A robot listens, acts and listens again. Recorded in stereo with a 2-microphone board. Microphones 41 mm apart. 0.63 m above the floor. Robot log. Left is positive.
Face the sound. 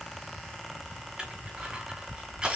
note: The crushing: about 20° right or 160° right.
cmd yaw -20
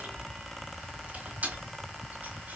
note: So it is at 140° right.
cmd yaw -140
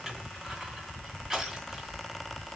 note: The crushing is now 10° right.
cmd yaw -10
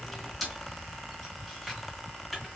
end: Facing the crushing, 2 to 4 m away.